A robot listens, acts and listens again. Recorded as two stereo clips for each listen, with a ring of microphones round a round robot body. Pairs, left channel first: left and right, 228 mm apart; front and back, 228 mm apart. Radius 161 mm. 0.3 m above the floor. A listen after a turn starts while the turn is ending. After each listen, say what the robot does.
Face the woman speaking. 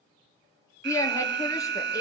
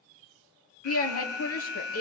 Turn 15° left.
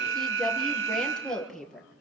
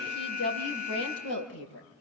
Found it: a woman speaking, straight ahead.